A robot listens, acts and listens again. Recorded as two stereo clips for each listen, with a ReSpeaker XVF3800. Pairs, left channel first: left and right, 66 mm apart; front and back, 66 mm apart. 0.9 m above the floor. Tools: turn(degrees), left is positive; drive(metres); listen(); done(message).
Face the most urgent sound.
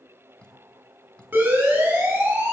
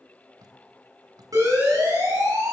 turn(degrees=-150)
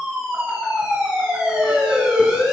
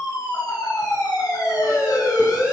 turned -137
turn(degrees=-10)
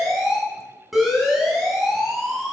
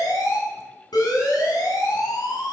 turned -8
done("Facing the siren, over 4 m away.")